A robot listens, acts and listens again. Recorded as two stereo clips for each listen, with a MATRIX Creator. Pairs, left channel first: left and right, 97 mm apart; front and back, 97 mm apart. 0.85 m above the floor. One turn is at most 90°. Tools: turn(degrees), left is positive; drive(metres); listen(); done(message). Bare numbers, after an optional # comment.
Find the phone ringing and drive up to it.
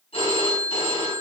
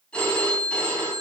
# The phone ringing: 80° left.
turn(80)
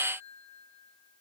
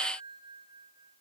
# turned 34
# Nothing new. It was at 45° left.
turn(45)
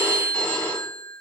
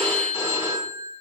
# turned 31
# The phone ringing is now 10° left.
turn(10)
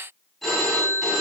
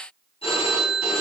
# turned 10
drive(1.0)
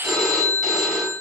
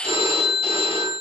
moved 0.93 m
drive(1.0)
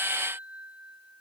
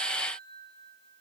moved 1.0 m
listen()
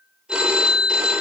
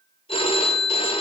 # The phone ringing is now 10° right.
turn(-10)
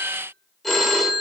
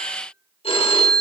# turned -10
drive(1.0)
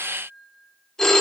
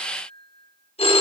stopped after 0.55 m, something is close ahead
done("I am next to the phone ringing.")